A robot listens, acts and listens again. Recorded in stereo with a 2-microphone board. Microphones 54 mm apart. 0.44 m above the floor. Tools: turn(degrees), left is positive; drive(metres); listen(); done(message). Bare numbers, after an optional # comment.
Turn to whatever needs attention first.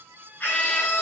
# The scream: about 30° left or 150° left.
turn(30)
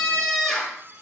done("Facing the scream, over 4 m away.")